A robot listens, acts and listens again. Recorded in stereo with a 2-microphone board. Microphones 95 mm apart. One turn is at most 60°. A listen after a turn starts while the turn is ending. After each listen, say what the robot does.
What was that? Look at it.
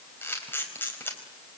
Turn 20° left.
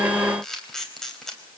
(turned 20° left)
Facing the camera shutter.